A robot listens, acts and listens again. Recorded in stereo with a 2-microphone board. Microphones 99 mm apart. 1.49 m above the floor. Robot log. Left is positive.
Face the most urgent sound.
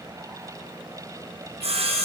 cmd idle
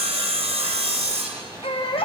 note: The baby crying: about 65° left or 115° left.
cmd yaw +65
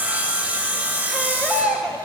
end: Facing the baby crying, under 1 m away.